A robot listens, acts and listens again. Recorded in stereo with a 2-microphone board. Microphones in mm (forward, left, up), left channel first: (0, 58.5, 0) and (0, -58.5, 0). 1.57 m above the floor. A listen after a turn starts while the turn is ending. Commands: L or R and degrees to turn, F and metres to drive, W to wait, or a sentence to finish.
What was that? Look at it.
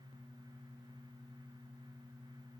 W
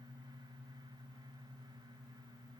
W
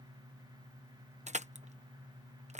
R90
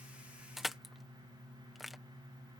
Found it: crushing, straight ahead.